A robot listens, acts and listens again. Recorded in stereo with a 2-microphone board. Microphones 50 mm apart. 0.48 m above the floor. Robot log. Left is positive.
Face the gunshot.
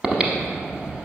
cmd idle
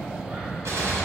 cmd yaw -90
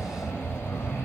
end: Facing where the gunshot came from. I can't hear it now.